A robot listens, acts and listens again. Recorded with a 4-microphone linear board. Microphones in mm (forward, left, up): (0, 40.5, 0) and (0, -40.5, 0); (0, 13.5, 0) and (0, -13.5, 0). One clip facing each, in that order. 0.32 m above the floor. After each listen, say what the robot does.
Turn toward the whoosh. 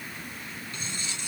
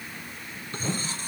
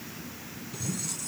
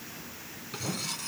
Turn 90° right.
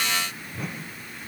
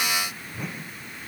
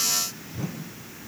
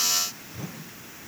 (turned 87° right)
Found it: a whoosh, straight ahead.